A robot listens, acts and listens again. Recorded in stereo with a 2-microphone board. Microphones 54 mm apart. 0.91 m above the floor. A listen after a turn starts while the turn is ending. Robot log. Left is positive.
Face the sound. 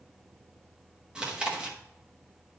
note: The chewing: about 20° right or 160° right.
cmd yaw -20
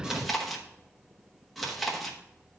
end: Facing the chewing, 1 to 2 m away.